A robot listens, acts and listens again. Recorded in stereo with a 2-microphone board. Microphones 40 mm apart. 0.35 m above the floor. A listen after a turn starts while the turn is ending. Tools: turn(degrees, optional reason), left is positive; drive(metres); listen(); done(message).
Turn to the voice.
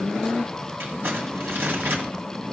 listen()
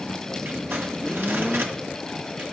listen()
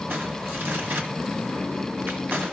done("I can't make out anyone speaking, only crumpling.")